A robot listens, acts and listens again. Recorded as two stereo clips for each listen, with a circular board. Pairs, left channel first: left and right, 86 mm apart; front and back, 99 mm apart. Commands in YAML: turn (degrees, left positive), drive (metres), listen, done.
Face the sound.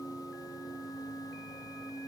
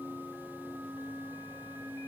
listen: true
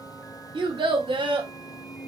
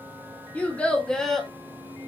turn: -85
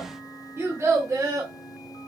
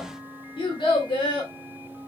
turn: -35
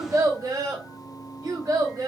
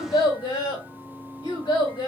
turn: -40
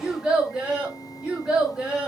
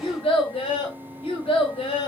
turn: -10
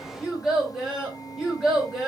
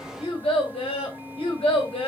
done: "Facing the child speaking, 1 to 2 m away."